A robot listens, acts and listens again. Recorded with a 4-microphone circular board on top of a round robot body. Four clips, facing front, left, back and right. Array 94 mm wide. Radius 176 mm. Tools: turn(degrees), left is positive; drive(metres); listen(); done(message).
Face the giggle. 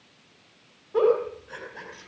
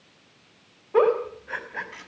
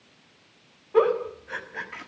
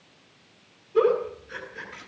turn(degrees=105)
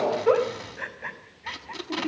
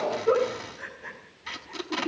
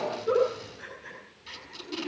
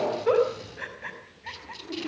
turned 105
turn(degrees=-20)
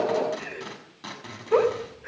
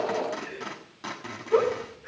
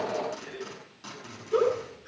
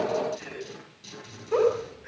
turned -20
done("Found it: a giggle, straight ahead, over 4 m away.")